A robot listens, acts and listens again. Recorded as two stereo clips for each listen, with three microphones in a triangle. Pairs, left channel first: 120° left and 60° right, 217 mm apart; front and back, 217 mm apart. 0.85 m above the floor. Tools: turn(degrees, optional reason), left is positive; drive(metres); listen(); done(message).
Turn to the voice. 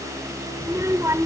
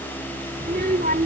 turn(degrees=-135, reason="The child speaking: 135° right.")
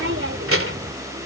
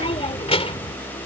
turn(degrees=-65, reason="The child speaking is now 65° right.")
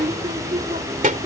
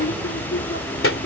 done("Found it: a child speaking, straight ahead.")